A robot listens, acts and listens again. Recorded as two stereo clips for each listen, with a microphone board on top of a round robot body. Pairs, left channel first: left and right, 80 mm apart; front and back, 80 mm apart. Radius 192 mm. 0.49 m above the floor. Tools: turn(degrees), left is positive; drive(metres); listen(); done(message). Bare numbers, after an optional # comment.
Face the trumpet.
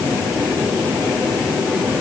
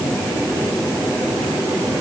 listen()
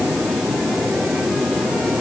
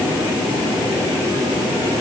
listen()
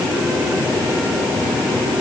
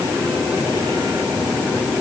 done("I can't make out a trumpet to turn to.")